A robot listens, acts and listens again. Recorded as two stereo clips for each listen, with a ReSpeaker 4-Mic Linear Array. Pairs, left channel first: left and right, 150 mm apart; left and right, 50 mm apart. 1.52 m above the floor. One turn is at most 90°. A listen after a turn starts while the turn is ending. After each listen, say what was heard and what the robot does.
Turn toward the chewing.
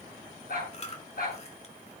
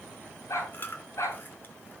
The chewing: about 45° left or 135° left. Turn 45° left.
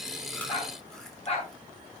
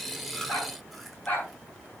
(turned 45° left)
Keep listening.
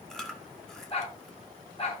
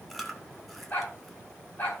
Facing the chewing, 1 to 2 m away.